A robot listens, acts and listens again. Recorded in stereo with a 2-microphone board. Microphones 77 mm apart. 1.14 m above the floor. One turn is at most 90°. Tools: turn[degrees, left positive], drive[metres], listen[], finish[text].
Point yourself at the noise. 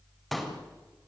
Action: turn[30]
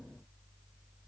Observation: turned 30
Action: listen[]
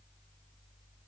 Action: finish[I heard a pop, but can't make it out now. It was about 30° right or 150° left.]